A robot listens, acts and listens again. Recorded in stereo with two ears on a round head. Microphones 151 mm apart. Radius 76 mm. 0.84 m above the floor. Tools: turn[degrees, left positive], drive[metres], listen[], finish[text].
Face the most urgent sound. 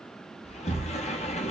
Action: listen[]
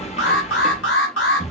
Action: turn[90]
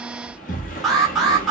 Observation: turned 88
Action: finish[Facing the alarm, 1 to 2 m away.]